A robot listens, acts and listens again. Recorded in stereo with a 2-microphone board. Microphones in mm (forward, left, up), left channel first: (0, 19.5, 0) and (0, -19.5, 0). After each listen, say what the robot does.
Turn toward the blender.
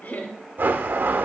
Turn 55° right.
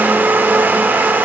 Turn 65° right.
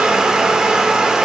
Turn 20° right.
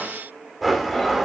Found it: a blender, straight ahead.